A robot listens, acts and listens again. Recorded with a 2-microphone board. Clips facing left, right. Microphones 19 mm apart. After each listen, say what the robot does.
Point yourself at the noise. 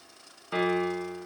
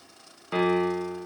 Turn 30° right.
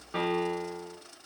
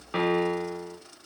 Turn 140° right.
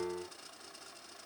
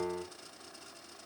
Turn 55° right.
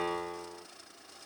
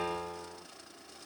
Turn 10° right.
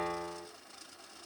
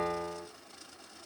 Facing the piano.